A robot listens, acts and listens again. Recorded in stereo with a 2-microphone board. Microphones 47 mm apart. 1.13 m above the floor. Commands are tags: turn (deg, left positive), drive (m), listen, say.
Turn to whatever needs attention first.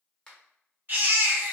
<turn deg="-45"/>
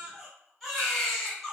<say>Found it: a baby crying, straight ahead.</say>